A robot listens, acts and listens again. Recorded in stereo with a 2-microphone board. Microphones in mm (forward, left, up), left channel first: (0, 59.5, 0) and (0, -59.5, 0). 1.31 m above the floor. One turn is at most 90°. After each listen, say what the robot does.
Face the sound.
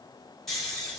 Turn 30° left.
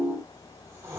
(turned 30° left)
Turn 25° right.
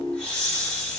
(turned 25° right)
Turn 10° left.
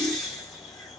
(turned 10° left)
Facing the snoring.